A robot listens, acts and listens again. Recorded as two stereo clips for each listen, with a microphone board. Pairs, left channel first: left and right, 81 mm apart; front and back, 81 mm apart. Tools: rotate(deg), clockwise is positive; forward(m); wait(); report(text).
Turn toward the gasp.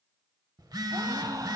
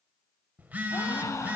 rotate(50)
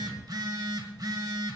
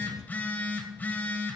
report("Facing where the gasp came from. I can't hear it now.")